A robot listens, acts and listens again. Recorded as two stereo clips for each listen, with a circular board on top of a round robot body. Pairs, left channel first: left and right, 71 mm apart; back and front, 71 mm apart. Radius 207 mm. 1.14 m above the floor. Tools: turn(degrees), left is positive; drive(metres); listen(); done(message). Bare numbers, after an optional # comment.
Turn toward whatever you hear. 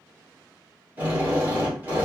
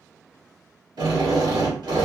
# The drill: 25° right.
turn(-25)
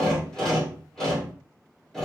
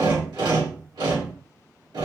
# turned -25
# The drill is now 10° left.
turn(10)
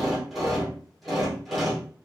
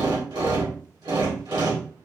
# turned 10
done("Found it: a drill, straight ahead.")